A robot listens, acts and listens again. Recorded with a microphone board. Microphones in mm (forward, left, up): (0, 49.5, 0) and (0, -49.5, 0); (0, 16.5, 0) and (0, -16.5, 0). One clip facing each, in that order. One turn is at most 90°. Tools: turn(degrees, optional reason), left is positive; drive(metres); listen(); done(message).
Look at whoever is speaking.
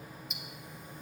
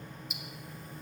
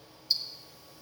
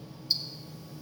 listen()
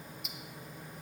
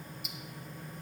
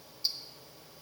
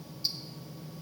listen()
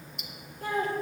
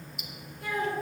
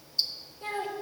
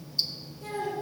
turn(degrees=35, reason="The child speaking: about 35° left or 145° left.")
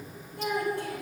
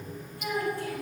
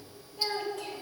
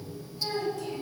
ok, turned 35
turn(degrees=90, reason="So it is at 110° left.")
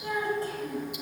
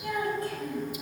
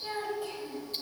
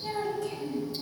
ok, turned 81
turn(degrees=30, reason="The child speaking is now 30° left.")
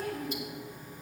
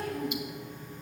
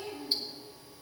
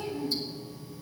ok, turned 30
done("Found it: a child speaking, straight ahead, over 4 m away.")